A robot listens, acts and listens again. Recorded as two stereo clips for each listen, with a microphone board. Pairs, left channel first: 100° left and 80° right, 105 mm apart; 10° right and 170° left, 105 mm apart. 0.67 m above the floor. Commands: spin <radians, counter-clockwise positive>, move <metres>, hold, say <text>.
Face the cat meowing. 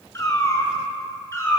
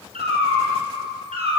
spin 2.88
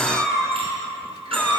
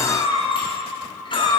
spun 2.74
spin 0.35
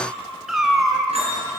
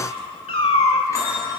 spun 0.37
spin 0.17
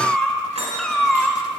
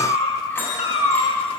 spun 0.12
spin 0.26
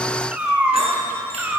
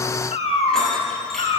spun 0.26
say Facing the cat meowing.